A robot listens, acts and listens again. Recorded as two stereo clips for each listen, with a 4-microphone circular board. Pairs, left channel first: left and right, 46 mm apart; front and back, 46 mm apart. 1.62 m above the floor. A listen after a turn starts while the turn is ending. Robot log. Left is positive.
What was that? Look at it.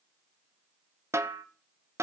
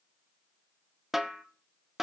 note: The snare drum: 95° right.
cmd yaw -95
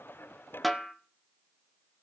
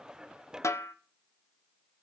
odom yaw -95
end: Found it: a snare drum, straight ahead, 1 to 2 m away.